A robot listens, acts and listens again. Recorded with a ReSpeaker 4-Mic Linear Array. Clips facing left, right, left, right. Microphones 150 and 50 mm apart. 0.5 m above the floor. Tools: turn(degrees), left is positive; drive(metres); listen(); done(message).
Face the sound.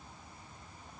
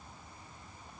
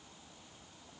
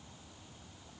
listen()
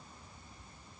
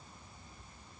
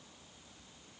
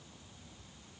listen()
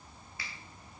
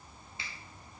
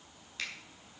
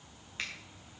turn(degrees=-20)
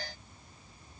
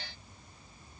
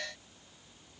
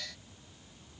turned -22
listen()
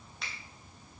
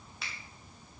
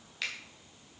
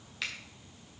done("Found it: a finger snap, straight ahead.")